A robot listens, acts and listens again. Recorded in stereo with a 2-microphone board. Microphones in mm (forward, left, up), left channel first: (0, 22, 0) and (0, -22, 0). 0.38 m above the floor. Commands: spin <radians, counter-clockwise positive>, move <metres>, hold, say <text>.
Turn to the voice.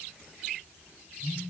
hold
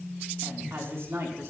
spin -1.05
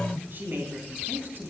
spin -0.96
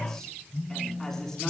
spin 0.17
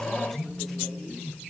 say Facing the woman speaking, over 4 m away.